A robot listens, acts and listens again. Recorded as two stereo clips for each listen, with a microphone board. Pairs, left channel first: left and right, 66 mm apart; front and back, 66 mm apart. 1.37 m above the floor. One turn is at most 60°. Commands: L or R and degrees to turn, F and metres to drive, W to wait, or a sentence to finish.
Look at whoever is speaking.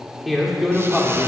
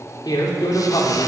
Found it: a man speaking, straight ahead.